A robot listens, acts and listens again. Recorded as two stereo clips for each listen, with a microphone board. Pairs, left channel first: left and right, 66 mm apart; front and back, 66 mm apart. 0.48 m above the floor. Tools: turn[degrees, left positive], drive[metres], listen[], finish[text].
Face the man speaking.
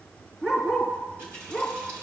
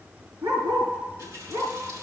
Action: listen[]
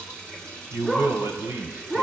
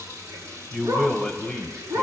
Thought: The man speaking: 70° right.
Action: turn[-70]
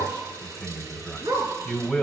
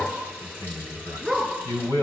Thought: The man speaking is now 15° left.
Action: turn[15]
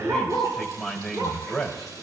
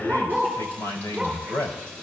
Action: finish[Found it: a man speaking, straight ahead.]